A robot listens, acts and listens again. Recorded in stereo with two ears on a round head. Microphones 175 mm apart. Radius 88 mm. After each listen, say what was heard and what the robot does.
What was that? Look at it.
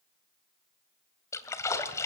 The splash: about 15° left or 165° left. Turn 15° left.
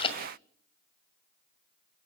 So it is at 150° left. Turn 150° left.
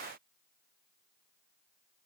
I heard a splash from this way, but can't make it out now.